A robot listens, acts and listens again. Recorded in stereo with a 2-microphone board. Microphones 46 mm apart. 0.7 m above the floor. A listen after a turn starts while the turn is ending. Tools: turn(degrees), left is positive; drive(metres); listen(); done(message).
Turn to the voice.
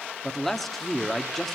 turn(degrees=30)
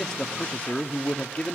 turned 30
turn(degrees=150)
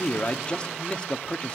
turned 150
turn(degrees=25)
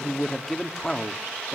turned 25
turn(degrees=10)
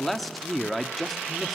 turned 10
done("Found it: a man speaking, straight ahead, 1 to 2 m away.")